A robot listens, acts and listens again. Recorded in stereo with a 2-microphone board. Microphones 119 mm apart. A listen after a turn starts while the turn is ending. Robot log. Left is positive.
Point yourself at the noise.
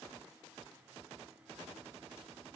cmd idle
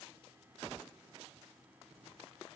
cmd idle
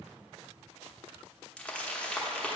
cmd yaw +30
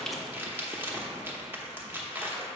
note: So it is at 20° right.
cmd yaw -20
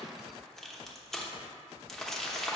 end: Facing the crumpling.